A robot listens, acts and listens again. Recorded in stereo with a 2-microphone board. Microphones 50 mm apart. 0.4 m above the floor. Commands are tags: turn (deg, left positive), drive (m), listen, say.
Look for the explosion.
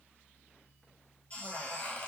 <listen/>
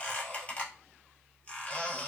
<listen/>
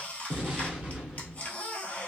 <turn deg="-20"/>
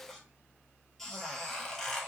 <listen/>
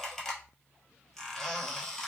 <say>I heard an explosion, but can't make it out now. It was about straight ahead or 140° right.</say>